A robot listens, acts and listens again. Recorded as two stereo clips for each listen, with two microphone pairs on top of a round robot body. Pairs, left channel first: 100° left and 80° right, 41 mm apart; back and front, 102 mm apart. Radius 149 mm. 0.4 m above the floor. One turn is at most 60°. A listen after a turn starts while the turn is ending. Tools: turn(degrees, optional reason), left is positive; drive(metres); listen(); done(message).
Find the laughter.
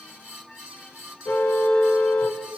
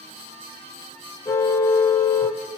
listen()
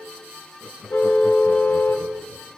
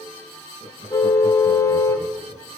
turn(degrees=-15, reason="The laughter: 15° right.")
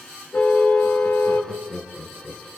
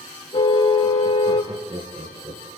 done("Found it: laughter, straight ahead.")